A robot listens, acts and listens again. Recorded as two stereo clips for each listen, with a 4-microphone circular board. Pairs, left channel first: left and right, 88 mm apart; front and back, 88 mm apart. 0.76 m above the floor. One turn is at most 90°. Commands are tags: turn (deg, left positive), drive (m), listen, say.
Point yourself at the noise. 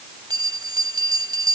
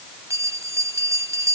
<turn deg="-90"/>
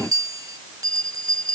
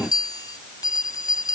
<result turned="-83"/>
<turn deg="-40"/>
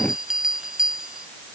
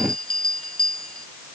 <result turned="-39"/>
<say>Facing the bell.</say>